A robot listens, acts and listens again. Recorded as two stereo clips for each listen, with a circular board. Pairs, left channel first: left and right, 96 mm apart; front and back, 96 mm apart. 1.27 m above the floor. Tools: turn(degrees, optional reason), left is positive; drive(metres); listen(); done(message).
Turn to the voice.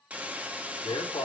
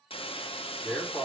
turn(degrees=65, reason="The man speaking: 65° left.")
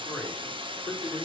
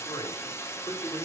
turn(degrees=25, reason="The man speaking is now 25° left.")
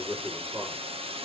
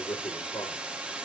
turn(degrees=-10, reason="The man speaking is now 10° right.")
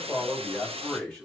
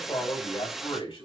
turn(degrees=10, reason="The man speaking is now 10° left.")
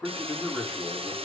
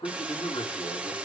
done("Found it: a man speaking, straight ahead.")